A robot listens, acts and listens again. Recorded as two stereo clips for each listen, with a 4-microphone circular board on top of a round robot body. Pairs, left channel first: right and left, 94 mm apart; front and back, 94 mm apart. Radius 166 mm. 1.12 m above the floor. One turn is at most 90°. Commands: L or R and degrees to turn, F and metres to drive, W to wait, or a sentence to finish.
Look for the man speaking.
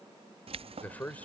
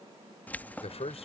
R15
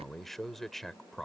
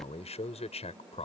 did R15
Facing the man speaking.